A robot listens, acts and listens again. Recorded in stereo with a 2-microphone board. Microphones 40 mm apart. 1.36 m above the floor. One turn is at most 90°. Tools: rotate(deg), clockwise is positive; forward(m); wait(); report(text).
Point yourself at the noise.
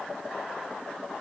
wait()
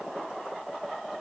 wait()
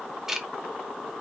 rotate(30)
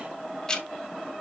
rotate(-15)
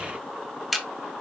report("Facing the ticking, 1 to 2 m away.")